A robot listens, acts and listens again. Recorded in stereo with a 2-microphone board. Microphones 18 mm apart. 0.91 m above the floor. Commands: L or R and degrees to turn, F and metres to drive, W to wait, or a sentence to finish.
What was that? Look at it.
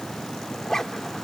L30
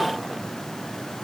W
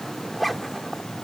Found it: a zipper, straight ahead.